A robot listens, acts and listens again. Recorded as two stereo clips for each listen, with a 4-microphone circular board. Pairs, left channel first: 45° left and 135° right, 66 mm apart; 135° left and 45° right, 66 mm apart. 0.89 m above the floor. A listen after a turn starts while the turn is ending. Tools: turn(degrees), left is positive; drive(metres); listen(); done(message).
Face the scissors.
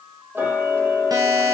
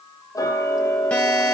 listen()
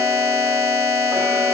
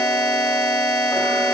listen()
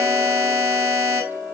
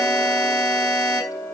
done("I can't make out scissors, only a buzzer and ticking.")